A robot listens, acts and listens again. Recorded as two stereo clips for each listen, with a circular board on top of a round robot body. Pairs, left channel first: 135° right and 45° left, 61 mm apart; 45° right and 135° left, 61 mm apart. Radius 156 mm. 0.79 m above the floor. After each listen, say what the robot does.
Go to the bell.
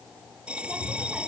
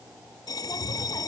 Turn 30° right.
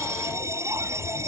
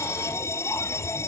Drive 1.0 m forward.
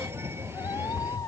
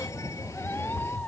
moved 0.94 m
Keep listening.
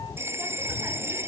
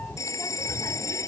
Drive 1.0 m forward.
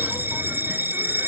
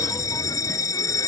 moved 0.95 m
Turn 15° right.
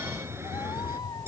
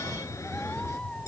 Keep listening.
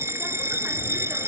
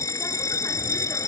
Drive 1.0 m forward.
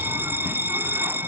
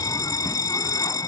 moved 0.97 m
Turn 15° right.
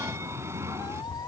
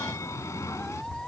Drive 1.0 m forward.
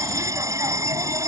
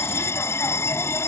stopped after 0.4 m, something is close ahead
Arrived at the bell, straight ahead.